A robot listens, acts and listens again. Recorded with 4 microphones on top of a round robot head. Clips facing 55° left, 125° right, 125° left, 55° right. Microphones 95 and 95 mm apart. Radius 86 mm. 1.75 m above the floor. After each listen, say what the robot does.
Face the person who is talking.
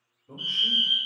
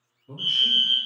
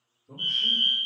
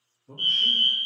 Turn 70° right.
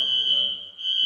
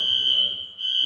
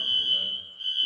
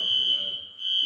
Keep listening.
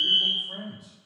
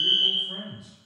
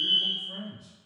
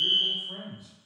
Facing the man speaking, 2 to 4 m away.